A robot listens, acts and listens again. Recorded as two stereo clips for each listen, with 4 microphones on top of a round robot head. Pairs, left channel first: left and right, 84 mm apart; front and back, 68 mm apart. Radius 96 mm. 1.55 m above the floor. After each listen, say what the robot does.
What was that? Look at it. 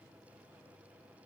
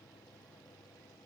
Keep listening.
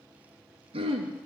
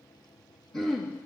Turn 80° right.
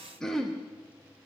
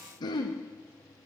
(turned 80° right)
Turn 10° left.
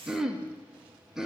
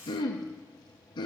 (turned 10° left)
Facing the throat clearing, 1 to 2 m away.